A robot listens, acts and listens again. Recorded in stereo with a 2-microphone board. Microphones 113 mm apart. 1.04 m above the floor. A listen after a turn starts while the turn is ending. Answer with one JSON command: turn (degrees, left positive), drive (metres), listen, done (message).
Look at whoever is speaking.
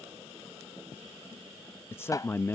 {"turn": 20}
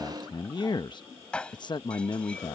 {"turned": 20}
{"turn": 140}
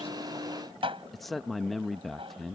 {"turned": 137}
{"done": "Facing the man speaking."}